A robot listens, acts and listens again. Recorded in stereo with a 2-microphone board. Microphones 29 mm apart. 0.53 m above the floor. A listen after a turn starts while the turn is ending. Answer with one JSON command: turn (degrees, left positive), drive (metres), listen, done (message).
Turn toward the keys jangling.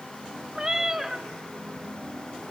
{"listen": true}
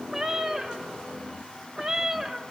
{"listen": true}
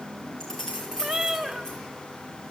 {"turn": 20}
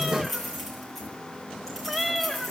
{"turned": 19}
{"turn": 30}
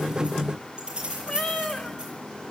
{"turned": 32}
{"turn": -30}
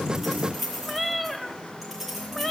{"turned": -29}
{"done": "Found it: keys jangling, straight ahead."}